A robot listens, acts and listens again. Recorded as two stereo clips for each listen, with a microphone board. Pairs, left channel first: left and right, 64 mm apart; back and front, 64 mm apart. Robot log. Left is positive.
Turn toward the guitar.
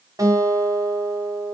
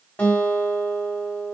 note: The guitar: 120° right.
cmd yaw -120
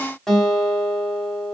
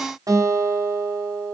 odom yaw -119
end: Found it: a guitar, straight ahead, 2 to 4 m away.